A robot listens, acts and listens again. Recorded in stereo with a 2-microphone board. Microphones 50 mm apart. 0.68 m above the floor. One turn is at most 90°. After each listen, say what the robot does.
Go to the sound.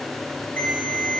Turn 35° left.
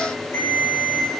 Turn 90° left.
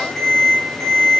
Turn 15° left.
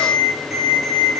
Drive 1.0 m forward.
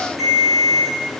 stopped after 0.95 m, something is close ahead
Arrived at the ringtone, straight ahead.